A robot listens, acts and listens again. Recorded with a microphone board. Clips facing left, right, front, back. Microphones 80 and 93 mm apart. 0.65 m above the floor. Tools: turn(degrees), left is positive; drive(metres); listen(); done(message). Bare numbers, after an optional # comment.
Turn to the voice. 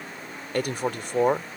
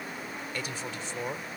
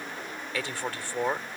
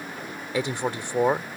# The man speaking: 110° left.
turn(110)
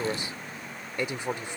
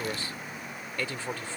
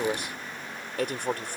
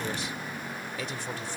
# The man speaking is now 20° left.
turn(20)
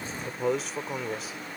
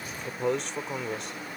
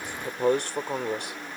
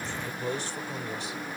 done("Found it: a man speaking, straight ahead.")